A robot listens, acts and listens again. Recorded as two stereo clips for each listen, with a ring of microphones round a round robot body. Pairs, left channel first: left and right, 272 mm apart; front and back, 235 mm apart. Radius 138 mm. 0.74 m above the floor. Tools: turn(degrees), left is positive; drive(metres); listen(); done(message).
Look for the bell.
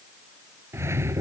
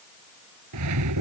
listen()
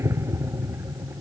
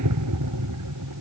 listen()
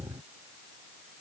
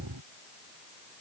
done("I can't make out a bell, only a whoosh.")